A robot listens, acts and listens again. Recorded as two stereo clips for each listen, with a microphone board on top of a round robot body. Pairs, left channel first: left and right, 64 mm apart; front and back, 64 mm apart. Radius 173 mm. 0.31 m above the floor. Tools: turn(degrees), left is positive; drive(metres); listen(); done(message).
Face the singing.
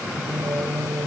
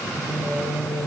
turn(degrees=-140)
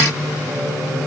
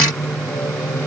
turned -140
turn(degrees=-35)
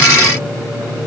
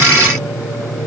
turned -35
done("Found it: singing, straight ahead.")